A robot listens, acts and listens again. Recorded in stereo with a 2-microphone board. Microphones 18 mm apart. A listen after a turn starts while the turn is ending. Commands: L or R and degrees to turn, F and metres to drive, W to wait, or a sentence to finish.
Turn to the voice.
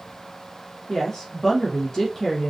L35
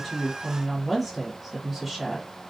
Found it: a woman speaking, straight ahead.